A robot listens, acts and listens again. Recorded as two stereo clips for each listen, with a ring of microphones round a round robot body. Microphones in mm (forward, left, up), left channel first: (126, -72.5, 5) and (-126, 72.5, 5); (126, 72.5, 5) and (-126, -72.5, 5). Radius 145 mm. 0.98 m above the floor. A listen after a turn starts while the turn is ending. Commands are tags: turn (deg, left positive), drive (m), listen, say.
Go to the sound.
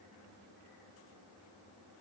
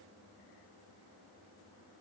<listen/>
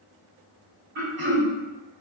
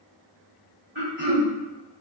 <turn deg="-170"/>
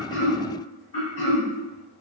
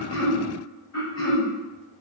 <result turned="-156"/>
<turn deg="-15"/>
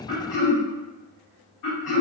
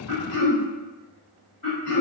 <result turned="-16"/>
<drive m="1.0"/>
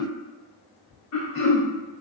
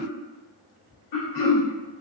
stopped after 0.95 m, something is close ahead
<say>I am next to the throat clearing.</say>